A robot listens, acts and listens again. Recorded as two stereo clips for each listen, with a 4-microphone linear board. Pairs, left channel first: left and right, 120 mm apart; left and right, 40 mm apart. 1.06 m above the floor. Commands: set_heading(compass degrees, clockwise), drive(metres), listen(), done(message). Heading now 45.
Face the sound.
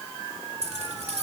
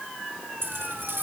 set_heading(115)
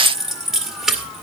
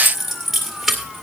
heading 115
done("Facing the keys jangling, 2 to 4 m away.")